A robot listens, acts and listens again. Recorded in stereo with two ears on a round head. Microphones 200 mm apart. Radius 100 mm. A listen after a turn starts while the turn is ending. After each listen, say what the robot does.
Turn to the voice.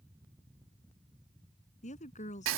Turn 35° left.
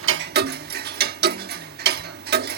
Keep listening.
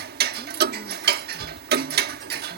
Keep listening.
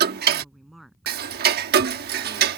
Found it: a woman speaking, straight ahead.